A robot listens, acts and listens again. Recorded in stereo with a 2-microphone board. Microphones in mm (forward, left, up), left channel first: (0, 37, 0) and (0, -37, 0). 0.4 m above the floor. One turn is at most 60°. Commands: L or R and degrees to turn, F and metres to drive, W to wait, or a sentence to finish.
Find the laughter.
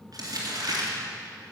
W
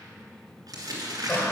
L35
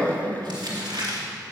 L25
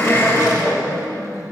L40
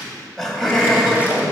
Facing the laughter, 1 to 2 m away.